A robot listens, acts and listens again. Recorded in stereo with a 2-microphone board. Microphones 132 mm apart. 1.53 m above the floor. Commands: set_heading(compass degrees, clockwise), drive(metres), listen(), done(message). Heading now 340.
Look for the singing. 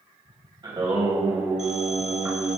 set_heading(355)
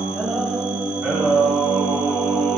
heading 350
set_heading(330)
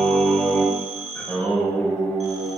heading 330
set_heading(310)
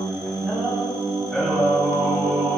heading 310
done("Found it: singing, straight ahead, 2 to 4 m away.")